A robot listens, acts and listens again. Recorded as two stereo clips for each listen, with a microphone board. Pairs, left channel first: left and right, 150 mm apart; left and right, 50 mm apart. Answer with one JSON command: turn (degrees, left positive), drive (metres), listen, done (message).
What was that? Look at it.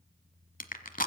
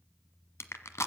{"turn": 70}
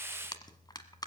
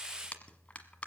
{"turn": 30}
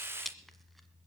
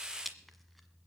{"done": "Found it: crushing, straight ahead, 1 to 2 m away."}